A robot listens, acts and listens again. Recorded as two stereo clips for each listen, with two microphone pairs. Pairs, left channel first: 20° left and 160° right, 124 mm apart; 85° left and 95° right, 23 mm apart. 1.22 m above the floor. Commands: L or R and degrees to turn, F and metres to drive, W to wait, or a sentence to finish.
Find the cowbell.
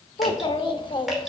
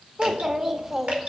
W
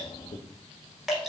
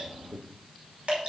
W
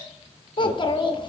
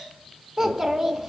I can't make out a cowbell to turn to.